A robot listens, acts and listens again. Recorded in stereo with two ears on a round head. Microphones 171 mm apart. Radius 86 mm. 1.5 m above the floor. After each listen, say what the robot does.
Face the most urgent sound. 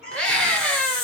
Turn 30° left.
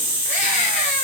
Keep listening.
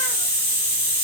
Keep listening.
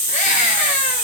I heard a scream, but can't make it out now. It was about 25° right or 145° left.